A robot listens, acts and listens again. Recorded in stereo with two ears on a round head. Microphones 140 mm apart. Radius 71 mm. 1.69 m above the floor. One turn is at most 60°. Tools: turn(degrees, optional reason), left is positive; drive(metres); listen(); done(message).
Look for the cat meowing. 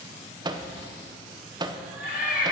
turn(degrees=-30)
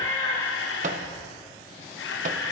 turn(degrees=15, reason="So it is at 15° left.")
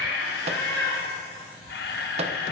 done("Facing the cat meowing, over 4 m away.")